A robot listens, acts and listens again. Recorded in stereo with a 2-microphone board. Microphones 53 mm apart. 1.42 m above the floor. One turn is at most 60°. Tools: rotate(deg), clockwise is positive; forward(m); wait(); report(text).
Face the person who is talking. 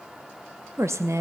rotate(60)
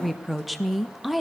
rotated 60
report("Found it: a woman speaking, straight ahead.")